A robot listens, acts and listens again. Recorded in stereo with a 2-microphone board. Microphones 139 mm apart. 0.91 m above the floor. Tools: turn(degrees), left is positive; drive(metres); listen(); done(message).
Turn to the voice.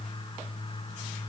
listen()
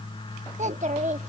turn(degrees=-60)
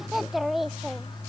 done("Found it: a child speaking, straight ahead.")